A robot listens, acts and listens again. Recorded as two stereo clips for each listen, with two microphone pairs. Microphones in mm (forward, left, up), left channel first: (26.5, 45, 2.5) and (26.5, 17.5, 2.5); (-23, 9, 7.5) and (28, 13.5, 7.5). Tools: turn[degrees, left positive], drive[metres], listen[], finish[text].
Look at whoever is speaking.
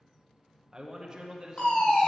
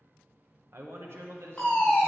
Thought: The man speaking: 20° right.
Action: turn[-20]
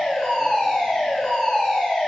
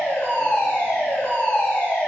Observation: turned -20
Action: listen[]
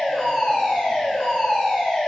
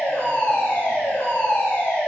Action: listen[]
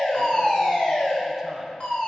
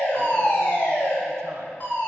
Action: finish[I heard a man speaking from this way, but can't make it out now.]